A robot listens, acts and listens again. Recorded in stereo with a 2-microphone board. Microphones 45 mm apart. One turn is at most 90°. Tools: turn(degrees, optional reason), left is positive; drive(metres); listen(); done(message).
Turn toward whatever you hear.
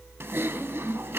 turn(degrees=-65, reason="The typing on a keyboard: about 65° right or 115° right.")
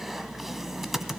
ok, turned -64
done("Facing the typing on a keyboard.")